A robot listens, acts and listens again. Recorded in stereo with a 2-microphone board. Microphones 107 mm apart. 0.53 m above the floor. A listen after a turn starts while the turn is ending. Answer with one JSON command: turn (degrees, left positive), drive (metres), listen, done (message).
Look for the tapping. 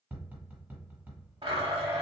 {"turn": -15}
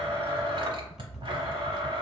{"listen": true}
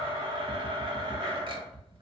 {"done": "Facing the tapping."}